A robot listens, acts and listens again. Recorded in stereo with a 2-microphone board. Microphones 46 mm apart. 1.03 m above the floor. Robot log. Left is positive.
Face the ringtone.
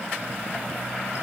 cmd idle
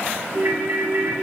note: The ringtone: about 60° right or 120° right.
cmd yaw -60
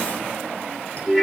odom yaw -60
end: Found it: a ringtone, straight ahead, 2 to 4 m away.